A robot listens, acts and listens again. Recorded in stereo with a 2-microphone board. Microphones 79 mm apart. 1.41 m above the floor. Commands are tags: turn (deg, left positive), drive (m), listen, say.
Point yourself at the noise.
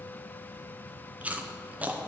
<turn deg="-20"/>
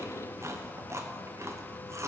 <turn deg="-140"/>
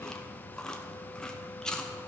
<turn deg="10"/>
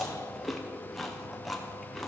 <say>Found it: chewing, straight ahead.</say>